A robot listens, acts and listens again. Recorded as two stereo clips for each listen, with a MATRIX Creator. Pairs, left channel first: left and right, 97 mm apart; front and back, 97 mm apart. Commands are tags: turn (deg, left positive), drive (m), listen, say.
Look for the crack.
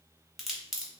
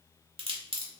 <turn deg="180"/>
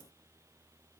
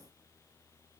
<say>Facing where the crack came from. I can't hear it now.</say>